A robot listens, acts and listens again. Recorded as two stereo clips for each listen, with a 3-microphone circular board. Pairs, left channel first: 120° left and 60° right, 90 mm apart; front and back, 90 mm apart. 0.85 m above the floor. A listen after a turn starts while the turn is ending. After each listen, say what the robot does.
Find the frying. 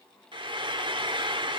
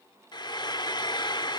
Turn 35° right.
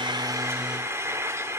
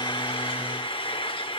Found it: frying, straight ahead.